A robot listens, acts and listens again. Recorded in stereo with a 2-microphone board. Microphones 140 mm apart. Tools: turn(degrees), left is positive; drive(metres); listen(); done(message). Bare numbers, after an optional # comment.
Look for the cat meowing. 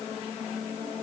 listen()
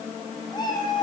# The cat meowing: about 30° left or 150° left.
turn(30)
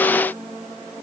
listen()
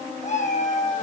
# So it is at 120° left.
turn(120)
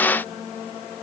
listen()
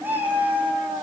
# The cat meowing is now 15° right.
turn(-15)
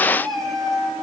done("Facing the cat meowing.")